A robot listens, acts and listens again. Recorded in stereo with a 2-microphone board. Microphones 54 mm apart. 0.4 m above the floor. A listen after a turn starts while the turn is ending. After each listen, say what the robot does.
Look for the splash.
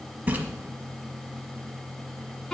Turn 30° right.
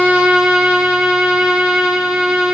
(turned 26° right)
Keep listening.
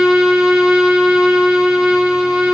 I heard a splash, but can't make it out now. It was about 5° right or 120° right.